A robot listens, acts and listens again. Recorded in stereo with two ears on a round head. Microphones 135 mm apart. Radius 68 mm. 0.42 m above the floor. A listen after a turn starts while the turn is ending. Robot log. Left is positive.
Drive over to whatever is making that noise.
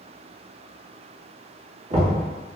note: The knocking: about 50° right or 130° right.
cmd yaw -50
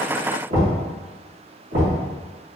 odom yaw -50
note: So it is at 70° right.
cmd yaw -70
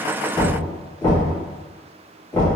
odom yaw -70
note: The knocking is now 20° left.
cmd yaw +20
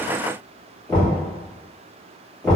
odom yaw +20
cmd fwd 1.0
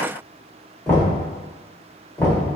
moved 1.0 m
note: The knocking is now 20° left.
cmd yaw +20
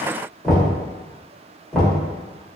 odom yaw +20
cmd fwd 1.0
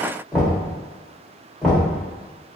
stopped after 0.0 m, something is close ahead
end: I am next to the knocking.